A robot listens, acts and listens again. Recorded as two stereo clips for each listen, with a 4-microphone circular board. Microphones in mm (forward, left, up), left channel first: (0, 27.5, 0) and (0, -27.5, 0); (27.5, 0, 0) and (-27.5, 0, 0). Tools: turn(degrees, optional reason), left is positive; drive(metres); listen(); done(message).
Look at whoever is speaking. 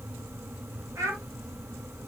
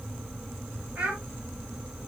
turn(degrees=-110, reason="The child speaking: 110° right.")
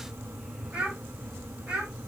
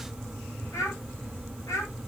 turn(degrees=-15, reason="The child speaking is now 15° right.")
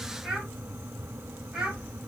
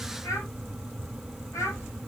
done("Found it: a child speaking, straight ahead.")